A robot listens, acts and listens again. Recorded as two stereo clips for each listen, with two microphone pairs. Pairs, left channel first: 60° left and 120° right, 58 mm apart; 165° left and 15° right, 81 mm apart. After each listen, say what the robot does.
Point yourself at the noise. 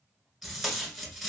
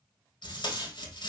Turn 150° left.
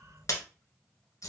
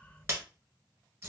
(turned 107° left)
Turn 45° left.
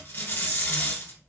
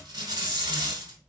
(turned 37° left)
Found it: tape being pulled, straight ahead.